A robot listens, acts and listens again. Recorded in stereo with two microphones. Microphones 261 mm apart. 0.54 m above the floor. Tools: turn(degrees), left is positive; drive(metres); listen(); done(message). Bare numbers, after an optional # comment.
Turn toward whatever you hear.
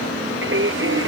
# The singing: about 50° right or 130° right.
turn(-50)
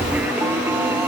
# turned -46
# So it is at 10° right.
turn(-10)
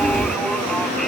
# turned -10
listen()
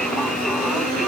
listen()
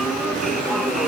done("Facing where the singing came from. I can't hear it now.")